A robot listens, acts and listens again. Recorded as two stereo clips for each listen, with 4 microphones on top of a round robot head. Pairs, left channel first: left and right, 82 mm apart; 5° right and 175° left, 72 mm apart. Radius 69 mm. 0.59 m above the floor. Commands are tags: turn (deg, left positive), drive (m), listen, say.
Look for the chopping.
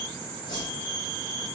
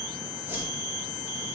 <listen/>
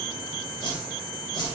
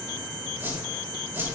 <listen/>
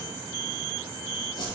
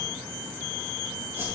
<say>I can't make out chopping, only a whoosh.</say>